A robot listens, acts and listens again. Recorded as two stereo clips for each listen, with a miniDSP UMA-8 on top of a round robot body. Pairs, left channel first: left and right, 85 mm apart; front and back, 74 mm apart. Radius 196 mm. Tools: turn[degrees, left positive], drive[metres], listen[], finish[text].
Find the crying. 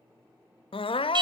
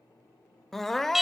Thought: The crying: 85° left.
Action: turn[85]
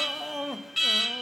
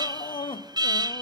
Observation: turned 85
Action: finish[Found it: crying, straight ahead.]